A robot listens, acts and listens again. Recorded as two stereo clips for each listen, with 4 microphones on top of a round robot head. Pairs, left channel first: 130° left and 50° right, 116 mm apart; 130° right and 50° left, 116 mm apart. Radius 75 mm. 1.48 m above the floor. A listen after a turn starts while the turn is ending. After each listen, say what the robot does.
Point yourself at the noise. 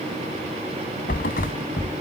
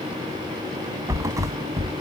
Turn 115° left.
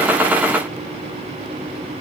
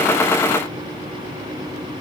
Facing where the thud came from. I can't hear it now.